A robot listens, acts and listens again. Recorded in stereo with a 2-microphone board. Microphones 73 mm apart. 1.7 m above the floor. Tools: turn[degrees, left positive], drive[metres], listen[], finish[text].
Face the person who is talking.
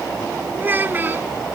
Thought: The child speaking: about 25° right or 155° right.
Action: turn[-25]
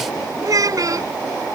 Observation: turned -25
Thought: So it is at 130° right.
Action: turn[-130]
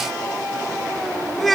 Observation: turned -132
Action: finish[Found it: a child speaking, straight ahead.]